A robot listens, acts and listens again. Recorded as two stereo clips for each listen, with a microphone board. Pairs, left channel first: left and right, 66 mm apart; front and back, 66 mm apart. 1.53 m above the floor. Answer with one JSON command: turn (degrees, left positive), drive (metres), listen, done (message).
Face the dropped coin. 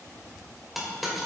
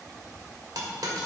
{"turn": -175}
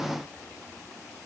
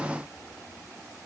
{"done": "I heard a dropped coin from this way, but can't make it out now."}